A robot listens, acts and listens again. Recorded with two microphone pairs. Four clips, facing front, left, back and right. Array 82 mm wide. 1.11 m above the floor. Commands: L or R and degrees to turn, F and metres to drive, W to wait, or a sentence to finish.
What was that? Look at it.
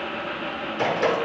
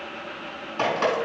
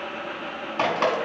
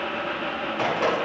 L165
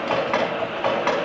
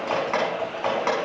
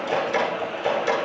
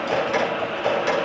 L30
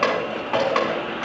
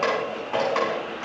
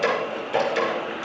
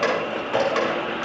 Facing the dripping, over 4 m away.